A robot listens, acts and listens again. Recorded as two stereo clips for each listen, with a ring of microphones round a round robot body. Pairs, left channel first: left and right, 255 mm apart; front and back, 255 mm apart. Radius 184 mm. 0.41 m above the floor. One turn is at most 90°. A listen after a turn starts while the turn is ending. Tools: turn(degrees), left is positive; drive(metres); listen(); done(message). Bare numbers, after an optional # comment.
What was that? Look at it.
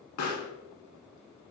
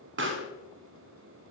# The pop: 135° left.
turn(90)
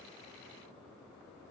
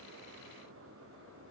# Nothing new. It was at 45° left.
turn(45)
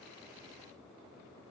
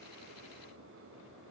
done("I heard a pop from this way, but can't make it out now.")